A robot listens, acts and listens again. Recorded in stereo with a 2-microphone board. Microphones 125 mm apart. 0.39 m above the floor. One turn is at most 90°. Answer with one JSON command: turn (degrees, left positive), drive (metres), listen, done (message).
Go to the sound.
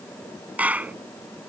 {"turn": -30}
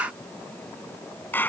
{"turn": 15}
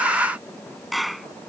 {"drive": 1.0}
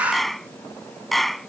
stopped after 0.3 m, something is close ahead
{"done": "Blocked. The clap is further on, straight ahead."}